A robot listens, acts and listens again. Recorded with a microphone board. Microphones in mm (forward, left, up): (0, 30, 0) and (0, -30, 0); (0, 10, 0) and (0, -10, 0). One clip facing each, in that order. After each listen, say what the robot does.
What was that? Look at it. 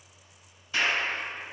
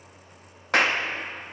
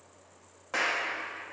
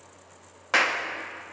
Turn 60° right.
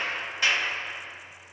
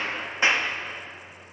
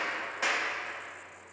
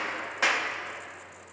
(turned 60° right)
Turn 30° right.
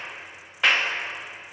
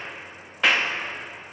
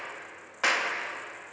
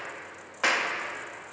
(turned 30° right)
Facing the clap, 1 to 2 m away.